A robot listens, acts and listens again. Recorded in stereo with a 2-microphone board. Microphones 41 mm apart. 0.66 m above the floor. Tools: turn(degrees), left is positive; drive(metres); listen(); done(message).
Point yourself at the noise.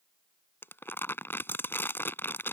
turn(degrees=65)
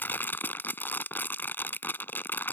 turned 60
turn(degrees=55)
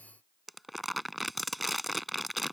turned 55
done("Facing the crumpling.")